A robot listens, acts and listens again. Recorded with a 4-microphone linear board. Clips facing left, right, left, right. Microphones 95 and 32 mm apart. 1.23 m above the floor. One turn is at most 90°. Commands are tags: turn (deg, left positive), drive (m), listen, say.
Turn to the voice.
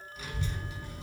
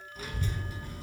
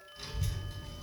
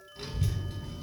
<turn deg="-45"/>
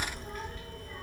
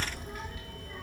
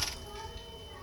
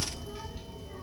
<say>Found it: a child speaking, straight ahead.</say>